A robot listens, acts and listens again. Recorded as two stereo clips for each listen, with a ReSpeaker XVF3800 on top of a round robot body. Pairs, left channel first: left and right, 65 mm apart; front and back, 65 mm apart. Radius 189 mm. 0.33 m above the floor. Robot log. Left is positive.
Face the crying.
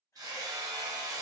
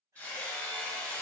cmd idle
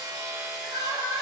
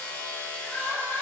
note: The crying: 120° right.
cmd yaw -120
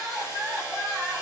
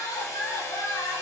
end: Found it: crying, straight ahead, 1 to 2 m away.